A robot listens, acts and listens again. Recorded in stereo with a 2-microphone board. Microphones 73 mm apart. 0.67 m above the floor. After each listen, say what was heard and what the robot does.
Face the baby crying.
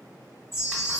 Keep listening.
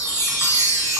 Keep listening.
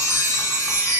I can't make out a baby crying to turn to.